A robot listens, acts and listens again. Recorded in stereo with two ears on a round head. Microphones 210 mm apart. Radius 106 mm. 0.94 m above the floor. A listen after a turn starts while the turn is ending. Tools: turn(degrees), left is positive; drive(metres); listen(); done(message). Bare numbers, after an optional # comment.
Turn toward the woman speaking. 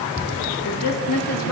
# The woman speaking: about 70° left or 110° left.
turn(70)
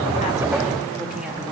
listen()
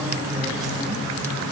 listen()
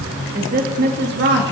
# So it is at 50° right.
turn(-50)
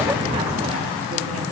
listen()
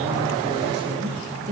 # The woman speaking is now 30° right.
turn(-30)
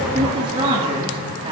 # The woman speaking is now 20° right.
turn(-20)
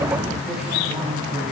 listen()
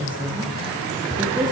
# The woman speaking is now 10° right.
turn(-10)
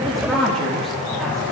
done("Facing the woman speaking, 2 to 4 m away.")